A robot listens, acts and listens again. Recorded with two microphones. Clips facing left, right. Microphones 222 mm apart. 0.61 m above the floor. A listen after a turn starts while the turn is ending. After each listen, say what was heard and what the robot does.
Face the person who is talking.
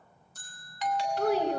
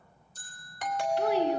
The child speaking: about 50° left or 130° left. Turn 50° left.
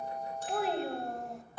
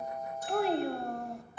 Found it: a child speaking, straight ahead, 2 to 4 m away.